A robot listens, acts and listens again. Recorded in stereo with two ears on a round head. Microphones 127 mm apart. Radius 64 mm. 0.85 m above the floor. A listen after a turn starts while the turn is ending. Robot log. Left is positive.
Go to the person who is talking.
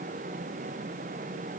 cmd idle
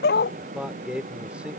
cmd yaw -30
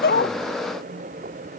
cmd idle
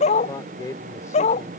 note: So it is at 25° left.
cmd yaw +25
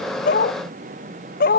cmd idle
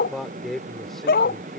cmd fwd 1.0
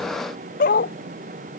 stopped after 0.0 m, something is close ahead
cmd idle
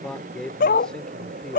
end: Blocked. The man speaking is further on, straight ahead.